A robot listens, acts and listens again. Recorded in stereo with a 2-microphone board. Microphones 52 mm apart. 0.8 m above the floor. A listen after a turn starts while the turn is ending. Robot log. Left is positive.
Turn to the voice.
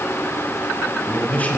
note: The man speaking: about 25° left or 155° left.
cmd yaw +25
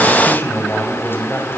note: The man speaking: about 40° left or 140° left.
cmd yaw +40
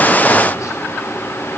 cmd idle
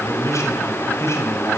note: So it is at 120° left.
cmd yaw +120
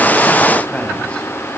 cmd idle
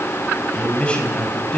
note: The man speaking is now 20° left.
cmd yaw +20
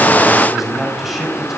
end: Facing the man speaking, over 4 m away.